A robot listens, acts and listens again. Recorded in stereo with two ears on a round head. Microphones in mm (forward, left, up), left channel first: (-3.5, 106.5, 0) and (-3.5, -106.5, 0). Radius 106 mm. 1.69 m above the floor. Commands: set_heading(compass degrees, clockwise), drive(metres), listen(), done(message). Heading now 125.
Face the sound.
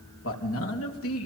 set_heading(50)
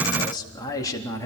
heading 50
set_heading(35)
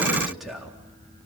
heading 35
done("Found it: a man speaking, straight ahead, over 4 m away.")